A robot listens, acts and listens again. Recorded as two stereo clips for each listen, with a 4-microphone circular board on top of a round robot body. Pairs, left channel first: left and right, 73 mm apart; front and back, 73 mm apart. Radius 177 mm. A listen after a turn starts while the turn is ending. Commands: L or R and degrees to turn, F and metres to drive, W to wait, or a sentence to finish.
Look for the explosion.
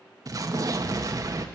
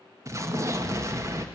R130
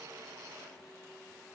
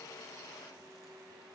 I heard an explosion from this way, but can't make it out now.